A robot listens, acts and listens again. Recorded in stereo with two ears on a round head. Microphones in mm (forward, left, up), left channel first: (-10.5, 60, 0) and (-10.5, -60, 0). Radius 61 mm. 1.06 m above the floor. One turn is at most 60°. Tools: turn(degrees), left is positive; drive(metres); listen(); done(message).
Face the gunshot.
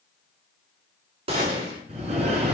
turn(degrees=-45)
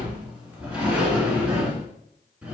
listen()
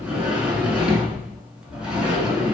done("I heard a gunshot, but can't make it out now. It was about straight ahead or 90° right.")